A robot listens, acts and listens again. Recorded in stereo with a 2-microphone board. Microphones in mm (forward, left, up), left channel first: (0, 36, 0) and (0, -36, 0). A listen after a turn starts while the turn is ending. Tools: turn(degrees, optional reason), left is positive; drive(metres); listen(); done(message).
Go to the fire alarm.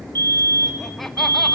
turn(degrees=-65, reason="The fire alarm: about 65° right or 115° right.")
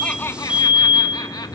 turn(degrees=-20, reason="So it is at 20° right.")
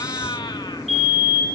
drive(metres=1.0)
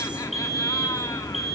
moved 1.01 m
drive(metres=1.0)
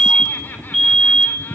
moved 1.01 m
drive(metres=1.0)
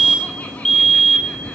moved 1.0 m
turn(degrees=10, reason="The fire alarm is now 10° left.")
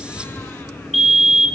drive(metres=1.0)
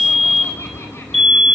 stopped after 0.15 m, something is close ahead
done("I am next to the fire alarm.")